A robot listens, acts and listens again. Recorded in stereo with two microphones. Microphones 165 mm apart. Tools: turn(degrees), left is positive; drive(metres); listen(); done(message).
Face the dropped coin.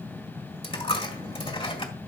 turn(degrees=35)
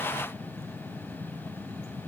listen()
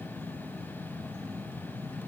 done("I heard a dropped coin, but can't make it out now. It was about straight ahead or 110° left.")